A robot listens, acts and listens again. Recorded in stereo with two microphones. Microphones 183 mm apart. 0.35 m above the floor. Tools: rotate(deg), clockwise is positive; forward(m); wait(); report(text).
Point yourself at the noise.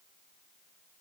wait()
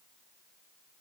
wait()
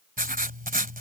rotate(50)
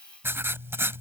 rotate(15)
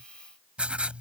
report("Found it: writing, straight ahead.")